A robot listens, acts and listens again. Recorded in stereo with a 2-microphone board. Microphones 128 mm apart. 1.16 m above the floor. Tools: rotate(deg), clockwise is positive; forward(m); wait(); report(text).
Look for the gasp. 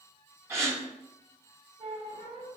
rotate(20)
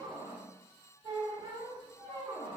wait()
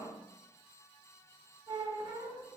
report("I heard a gasp, but can't make it out now. It was about straight ahead or 140° right.")